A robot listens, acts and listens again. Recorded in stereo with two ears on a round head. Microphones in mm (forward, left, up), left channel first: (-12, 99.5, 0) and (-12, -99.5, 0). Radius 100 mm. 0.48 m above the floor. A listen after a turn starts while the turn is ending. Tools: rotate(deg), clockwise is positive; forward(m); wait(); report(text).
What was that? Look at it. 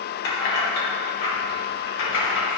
rotate(-65)
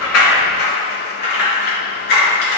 rotate(-50)
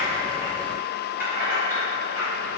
rotate(10)
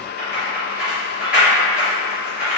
report("Facing the keys jangling, over 4 m away.")